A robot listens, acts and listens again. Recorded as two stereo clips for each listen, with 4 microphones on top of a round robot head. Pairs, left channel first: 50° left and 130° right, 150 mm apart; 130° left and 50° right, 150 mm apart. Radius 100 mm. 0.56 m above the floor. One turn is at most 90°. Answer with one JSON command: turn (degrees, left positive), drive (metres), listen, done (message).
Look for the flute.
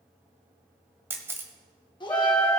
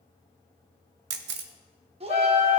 {"turn": 90}
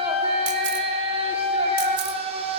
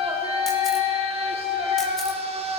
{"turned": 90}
{"turn": 45}
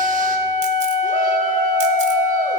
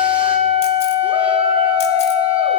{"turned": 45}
{"done": "Found it: a flute, straight ahead."}